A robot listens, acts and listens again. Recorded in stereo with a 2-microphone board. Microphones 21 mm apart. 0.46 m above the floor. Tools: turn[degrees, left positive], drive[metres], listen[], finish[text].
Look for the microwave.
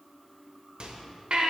Thought: The microwave: about 55° right or 125° right.
Action: turn[-55]
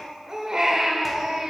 Action: listen[]
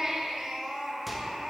Action: listen[]
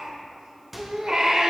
Thought: So it is at 10° right.
Action: turn[-10]
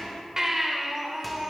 Action: listen[]
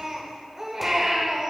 Action: listen[]
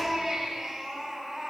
Action: finish[Facing where the microwave came from. I can't hear it now.]